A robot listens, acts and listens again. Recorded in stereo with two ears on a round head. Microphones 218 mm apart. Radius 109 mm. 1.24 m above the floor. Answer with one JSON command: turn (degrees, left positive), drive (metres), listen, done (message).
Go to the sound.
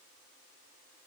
{"listen": true}
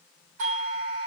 {"turn": -65}
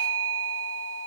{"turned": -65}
{"turn": -45}
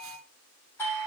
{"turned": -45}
{"turn": 10}
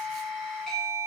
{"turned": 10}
{"drive": 1.0}
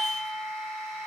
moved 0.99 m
{"drive": 1.0}
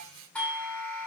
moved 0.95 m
{"drive": 1.0}
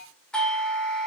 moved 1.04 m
{"drive": 1.0}
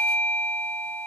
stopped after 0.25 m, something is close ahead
{"done": "Arrived at the doorbell, straight ahead."}